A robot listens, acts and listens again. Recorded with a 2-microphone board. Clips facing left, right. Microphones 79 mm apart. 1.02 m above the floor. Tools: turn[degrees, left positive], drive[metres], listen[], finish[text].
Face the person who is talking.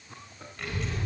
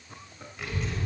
Action: turn[30]
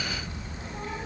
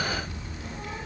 Thought: So it is at 150° left.
Action: turn[150]
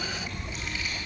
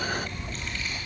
Action: finish[Found it: a child speaking, straight ahead, over 4 m away.]